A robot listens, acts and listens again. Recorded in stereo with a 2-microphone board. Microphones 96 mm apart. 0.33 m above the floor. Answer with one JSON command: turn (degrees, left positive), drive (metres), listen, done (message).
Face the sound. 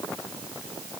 {"listen": true}
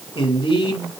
{"turn": 70}
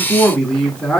{"turn": 10}
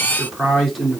{"done": "Facing the man speaking, 2 to 4 m away."}